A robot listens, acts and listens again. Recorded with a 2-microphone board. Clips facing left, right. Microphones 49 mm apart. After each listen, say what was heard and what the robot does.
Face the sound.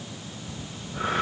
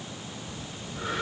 The breathing: about 50° left or 130° left. Turn 50° left.
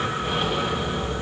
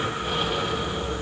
Found it: breathing, straight ahead.